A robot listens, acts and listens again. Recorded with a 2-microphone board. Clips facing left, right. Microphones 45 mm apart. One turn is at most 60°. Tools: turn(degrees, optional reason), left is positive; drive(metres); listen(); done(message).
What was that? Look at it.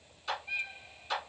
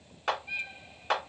turn(degrees=-60, reason="The clap: about 60° right or 120° right.")
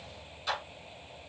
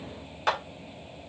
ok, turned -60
turn(degrees=-60, reason="So it is at 60° right.")
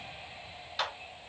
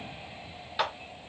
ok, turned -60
turn(degrees=-10, reason="The clap is now 10° right.")
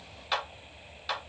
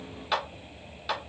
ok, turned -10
done("Found it: a clap, straight ahead.")